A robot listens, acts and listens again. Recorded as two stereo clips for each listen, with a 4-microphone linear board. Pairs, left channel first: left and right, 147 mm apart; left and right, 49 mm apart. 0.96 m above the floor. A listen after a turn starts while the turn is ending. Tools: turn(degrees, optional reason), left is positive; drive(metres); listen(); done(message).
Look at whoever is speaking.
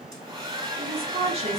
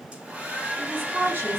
turn(degrees=-45, reason="The woman speaking: about 45° right or 135° right.")
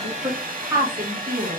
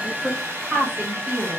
turn(degrees=-25, reason="So it is at 25° right.")
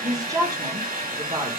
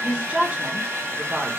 turn(degrees=-35, reason="The woman speaking is now 35° right.")
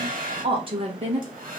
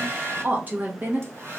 turn(degrees=-40, reason="The woman speaking is now 40° right.")
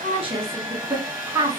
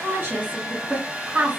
turn(degrees=-20, reason="The woman speaking is now 20° right.")
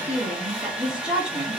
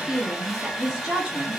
done("Found it: a woman speaking, straight ahead.")